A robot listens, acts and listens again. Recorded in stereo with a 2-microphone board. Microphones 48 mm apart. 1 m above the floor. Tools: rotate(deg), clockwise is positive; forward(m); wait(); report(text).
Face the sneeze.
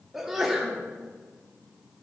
rotate(30)
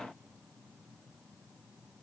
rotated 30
wait()
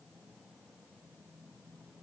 report("I heard a sneeze, but can't make it out now. It was about 25° left or 145° right.")